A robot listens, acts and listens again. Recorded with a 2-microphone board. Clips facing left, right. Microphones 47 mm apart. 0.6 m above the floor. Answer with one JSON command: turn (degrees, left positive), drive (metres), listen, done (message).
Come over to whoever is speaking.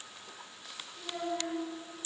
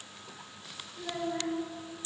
{"turn": -30}
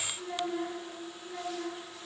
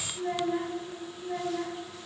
{"turn": -120}
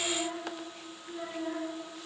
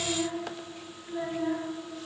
{"turn": -35}
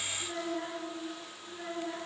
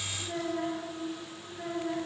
{"drive": 1.0}
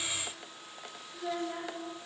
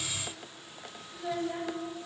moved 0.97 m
{"turn": -10}
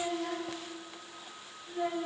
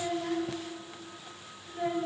{"drive": 1.0}
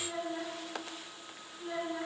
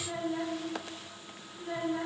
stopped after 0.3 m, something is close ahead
{"turn": -10}
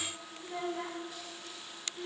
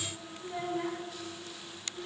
{"done": "I am next to the child speaking."}